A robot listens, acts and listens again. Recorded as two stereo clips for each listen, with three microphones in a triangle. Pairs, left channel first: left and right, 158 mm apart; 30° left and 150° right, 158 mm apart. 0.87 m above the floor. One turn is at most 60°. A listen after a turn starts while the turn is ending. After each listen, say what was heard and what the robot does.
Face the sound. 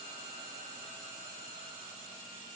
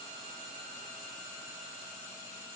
Keep listening.
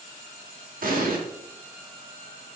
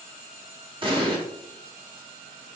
The explosion: 95° right. Turn 60° right.
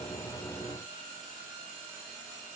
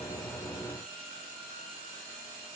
Nothing new. It was at 35° right. Turn 35° right.
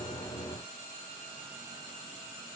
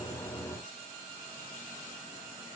Facing where the explosion came from. I can't hear it now.